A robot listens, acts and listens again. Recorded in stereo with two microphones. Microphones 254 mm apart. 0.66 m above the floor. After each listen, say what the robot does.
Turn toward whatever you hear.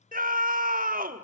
Turn 35° right.
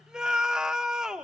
Found it: a scream, straight ahead, 1 to 2 m away.